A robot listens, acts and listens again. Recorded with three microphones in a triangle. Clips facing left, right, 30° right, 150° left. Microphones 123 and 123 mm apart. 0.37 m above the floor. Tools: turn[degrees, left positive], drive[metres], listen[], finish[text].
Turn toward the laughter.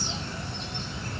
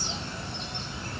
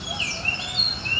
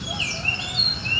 Action: listen[]
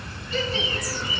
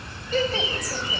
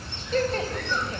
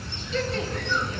Thought: The laughter: 60° right.
Action: turn[-60]
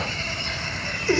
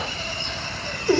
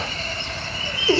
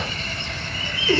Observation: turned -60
Thought: The laughter is now 30° right.
Action: turn[-30]
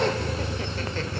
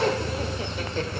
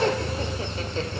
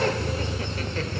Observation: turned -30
Thought: The laughter is now 50° right.
Action: turn[-50]
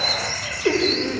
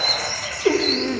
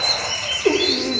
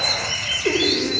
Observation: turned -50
Thought: The laughter is now 20° right.
Action: turn[-20]
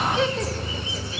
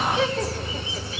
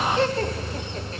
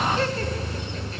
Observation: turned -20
Action: finish[Found it: laughter, straight ahead.]